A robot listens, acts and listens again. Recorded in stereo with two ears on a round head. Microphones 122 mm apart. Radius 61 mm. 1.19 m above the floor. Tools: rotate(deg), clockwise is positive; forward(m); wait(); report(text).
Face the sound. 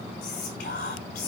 rotate(-60)
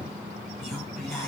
report("Facing the whispering.")